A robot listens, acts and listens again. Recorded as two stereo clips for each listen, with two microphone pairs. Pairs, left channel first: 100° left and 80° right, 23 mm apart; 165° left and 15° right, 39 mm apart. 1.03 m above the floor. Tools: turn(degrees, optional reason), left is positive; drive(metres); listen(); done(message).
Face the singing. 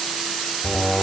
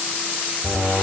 done("Facing the singing.")